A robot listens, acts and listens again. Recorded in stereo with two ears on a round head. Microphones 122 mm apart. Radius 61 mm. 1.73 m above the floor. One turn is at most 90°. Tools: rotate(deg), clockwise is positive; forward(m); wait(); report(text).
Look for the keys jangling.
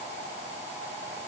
wait()
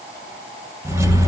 rotate(25)
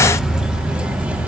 rotate(30)
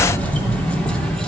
report("Found it: keys jangling, straight ahead.")